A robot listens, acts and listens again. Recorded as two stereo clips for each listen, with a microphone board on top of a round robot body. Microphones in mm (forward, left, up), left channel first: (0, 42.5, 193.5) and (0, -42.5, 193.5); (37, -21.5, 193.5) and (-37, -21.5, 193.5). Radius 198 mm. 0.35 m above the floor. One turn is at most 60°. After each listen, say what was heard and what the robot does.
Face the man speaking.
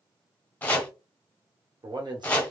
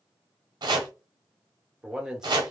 The man speaking: 100° right. Turn 60° right.
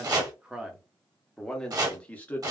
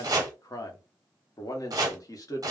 The man speaking is now 20° left. Turn 20° left.
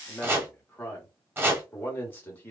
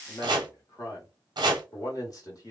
The man speaking is now 25° left. Turn 25° left.
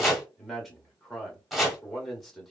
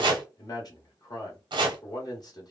Facing the man speaking, 1 to 2 m away.